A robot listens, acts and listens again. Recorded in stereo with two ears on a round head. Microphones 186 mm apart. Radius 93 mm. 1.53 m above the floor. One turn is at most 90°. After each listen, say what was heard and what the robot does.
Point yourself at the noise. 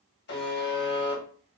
The buzzer: about 55° left or 125° left. Turn 55° left.
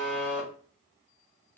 So it is at 10° left. Turn 10° left.
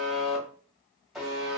Found it: a buzzer, straight ahead.